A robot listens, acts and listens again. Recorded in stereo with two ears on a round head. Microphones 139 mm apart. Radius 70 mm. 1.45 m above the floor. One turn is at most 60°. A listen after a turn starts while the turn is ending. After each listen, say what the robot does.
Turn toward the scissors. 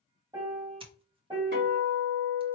Turn 35° right.
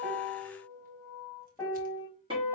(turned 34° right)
Keep listening.
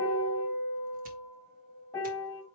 Keep listening.
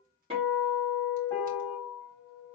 I heard scissors, but can't make it out now. It was about straight ahead or 110° right.